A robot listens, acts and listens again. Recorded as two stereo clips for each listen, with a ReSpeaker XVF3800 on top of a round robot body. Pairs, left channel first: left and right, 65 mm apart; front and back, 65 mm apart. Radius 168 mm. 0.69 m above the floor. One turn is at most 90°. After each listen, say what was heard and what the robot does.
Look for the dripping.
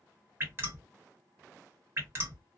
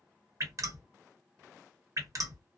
The dripping: 145° right. Turn 90° right.
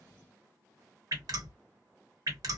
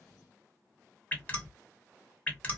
The dripping is now 70° right. Turn 70° right.
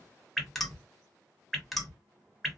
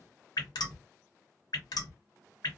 Facing the dripping, 1 to 2 m away.